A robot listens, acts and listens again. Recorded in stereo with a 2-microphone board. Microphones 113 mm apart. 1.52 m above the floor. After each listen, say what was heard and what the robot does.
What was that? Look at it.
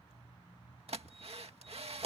The drill: about 70° right or 110° right. Turn 70° right.
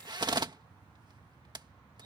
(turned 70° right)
So it is at 45° right. Turn 45° right.
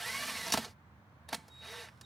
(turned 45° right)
Found it: a drill, straight ahead.